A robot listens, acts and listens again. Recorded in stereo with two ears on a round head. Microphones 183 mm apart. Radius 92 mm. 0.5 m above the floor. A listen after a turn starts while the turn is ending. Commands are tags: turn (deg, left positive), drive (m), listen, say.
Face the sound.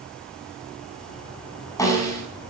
<turn deg="15"/>
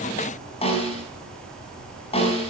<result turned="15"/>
<turn deg="150"/>
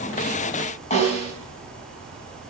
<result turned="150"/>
<turn deg="35"/>
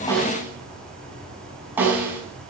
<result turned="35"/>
<turn deg="-10"/>
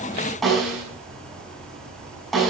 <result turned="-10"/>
<say>Facing the snare drum.</say>